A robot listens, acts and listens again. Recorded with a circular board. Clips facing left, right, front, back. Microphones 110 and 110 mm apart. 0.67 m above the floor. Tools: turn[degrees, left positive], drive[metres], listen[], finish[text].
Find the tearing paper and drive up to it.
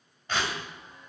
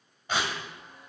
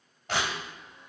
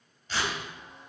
Thought: The tearing paper: 10° right.
Action: turn[-10]
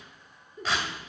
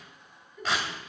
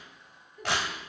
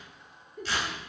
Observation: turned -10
Action: drive[1.0]
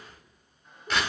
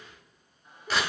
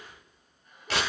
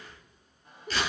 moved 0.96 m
Action: drive[1.0]
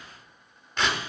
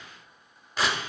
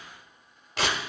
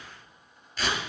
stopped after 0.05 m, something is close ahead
Action: finish[I am next to the tearing paper.]